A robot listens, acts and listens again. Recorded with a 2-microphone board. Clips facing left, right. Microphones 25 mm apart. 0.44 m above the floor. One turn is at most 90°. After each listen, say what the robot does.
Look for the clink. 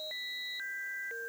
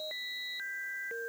Keep listening.
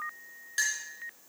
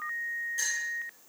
Turn 60° left.
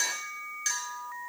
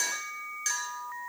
Facing the clink, 2 to 4 m away.